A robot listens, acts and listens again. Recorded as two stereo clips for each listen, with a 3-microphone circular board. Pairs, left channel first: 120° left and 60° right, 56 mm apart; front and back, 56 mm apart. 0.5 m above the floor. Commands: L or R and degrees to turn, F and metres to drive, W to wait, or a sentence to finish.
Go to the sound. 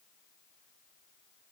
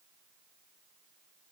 W
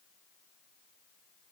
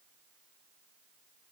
W
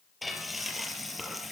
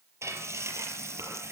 R150
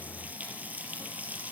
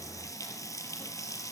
F1.0
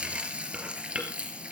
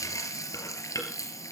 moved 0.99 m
L10
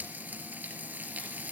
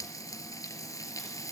F1.0
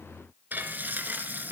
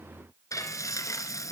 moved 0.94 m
F1.0
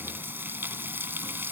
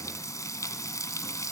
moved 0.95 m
R10
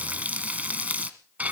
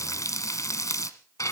F1.0
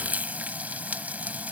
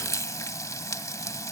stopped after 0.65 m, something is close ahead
I am next to the frying.